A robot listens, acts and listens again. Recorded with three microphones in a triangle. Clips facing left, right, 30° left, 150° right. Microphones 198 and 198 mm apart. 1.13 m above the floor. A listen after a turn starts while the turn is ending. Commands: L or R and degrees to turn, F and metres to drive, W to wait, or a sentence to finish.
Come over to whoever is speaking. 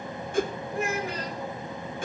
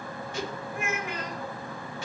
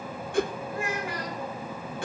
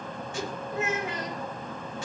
L145
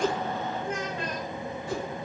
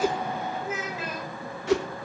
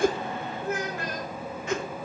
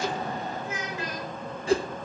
F1.0
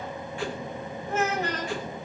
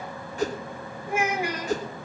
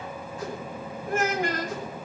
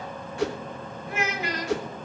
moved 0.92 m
R10
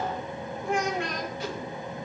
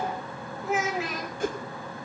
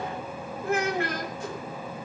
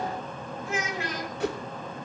F1.0
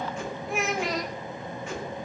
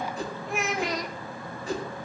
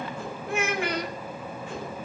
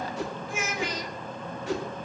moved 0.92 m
F1.0
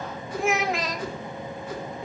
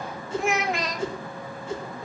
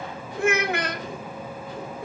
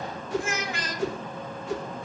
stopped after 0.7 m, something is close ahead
Arrived at the child speaking, straight ahead.